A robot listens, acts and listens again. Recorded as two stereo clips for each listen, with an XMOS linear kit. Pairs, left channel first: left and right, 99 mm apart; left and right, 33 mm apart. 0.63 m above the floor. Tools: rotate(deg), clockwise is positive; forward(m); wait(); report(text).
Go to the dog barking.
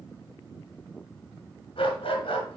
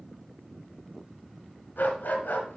rotate(-70)
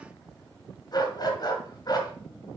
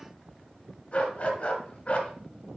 rotate(-40)
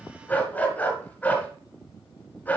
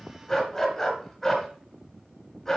rotate(-15)
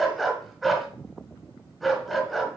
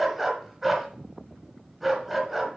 forward(1.0)
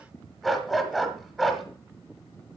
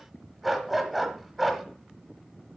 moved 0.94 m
forward(1.0)
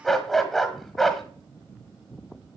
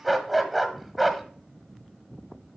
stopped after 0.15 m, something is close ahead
report("I am next to the dog barking.")